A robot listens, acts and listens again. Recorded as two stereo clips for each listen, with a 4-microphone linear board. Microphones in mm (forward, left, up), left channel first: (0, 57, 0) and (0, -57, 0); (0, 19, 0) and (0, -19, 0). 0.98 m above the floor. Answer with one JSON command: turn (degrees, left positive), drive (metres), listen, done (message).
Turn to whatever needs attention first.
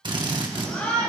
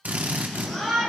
{"turn": 30}
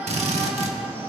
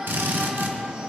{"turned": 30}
{"turn": -20}
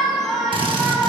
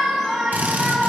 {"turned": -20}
{"done": "Facing the shout, over 4 m away."}